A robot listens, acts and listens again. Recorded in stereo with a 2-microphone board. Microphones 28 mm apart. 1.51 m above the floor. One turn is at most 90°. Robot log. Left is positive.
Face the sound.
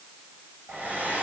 cmd yaw -90
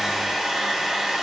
note: So it is at 10° right.
cmd yaw -10
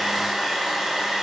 end: Facing the hair dryer, over 4 m away.